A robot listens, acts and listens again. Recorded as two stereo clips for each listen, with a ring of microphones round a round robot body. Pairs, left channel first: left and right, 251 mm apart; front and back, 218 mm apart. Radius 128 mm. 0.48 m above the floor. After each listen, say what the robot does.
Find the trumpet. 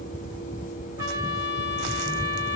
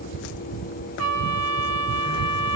Turn 170° right.
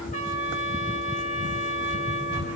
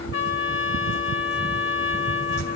Turn 25° left.
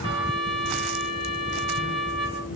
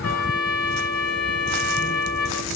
Turn 20° right.
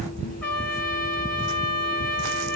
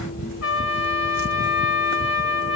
Found it: a trumpet, straight ahead, over 4 m away.